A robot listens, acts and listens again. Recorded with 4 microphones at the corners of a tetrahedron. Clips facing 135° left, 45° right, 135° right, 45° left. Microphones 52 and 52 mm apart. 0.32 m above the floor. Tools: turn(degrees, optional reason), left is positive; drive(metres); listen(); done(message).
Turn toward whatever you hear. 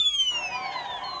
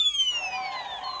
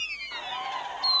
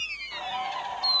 turn(degrees=165, reason="The bird: 165° left.")
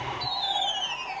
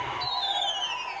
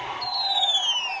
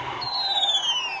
done("Facing the bird, 2 to 4 m away.")